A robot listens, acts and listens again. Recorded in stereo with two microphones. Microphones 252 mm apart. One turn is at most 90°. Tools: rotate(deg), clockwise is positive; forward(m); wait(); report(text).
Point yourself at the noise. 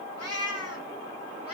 rotate(-70)
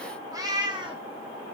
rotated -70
rotate(20)
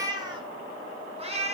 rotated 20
rotate(25)
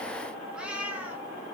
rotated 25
report("Found it: a cat meowing, straight ahead, 2 to 4 m away.")